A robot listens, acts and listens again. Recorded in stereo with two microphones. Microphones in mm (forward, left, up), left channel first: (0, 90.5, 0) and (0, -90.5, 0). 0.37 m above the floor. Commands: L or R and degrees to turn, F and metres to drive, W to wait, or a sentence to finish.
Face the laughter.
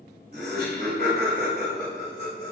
R50
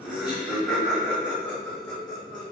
L15
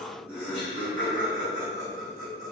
L15
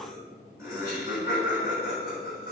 Facing the laughter.